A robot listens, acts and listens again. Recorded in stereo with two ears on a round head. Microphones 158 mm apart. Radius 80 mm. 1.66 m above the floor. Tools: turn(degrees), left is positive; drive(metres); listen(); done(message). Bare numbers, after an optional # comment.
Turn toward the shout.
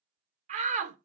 # The shout: about 45° right or 135° right.
turn(-45)
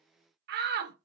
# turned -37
# So it is at 90° right.
turn(-90)
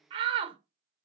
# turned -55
# The shout is now 35° right.
turn(-35)
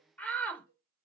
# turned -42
# The shout is now 10° left.
turn(10)
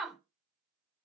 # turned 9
done("Facing the shout, under 1 m away.")